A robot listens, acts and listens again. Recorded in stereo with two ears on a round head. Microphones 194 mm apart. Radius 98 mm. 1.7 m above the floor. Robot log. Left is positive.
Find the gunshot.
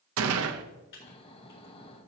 cmd yaw -90
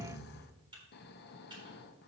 end: I heard a gunshot from this way, but can't make it out now.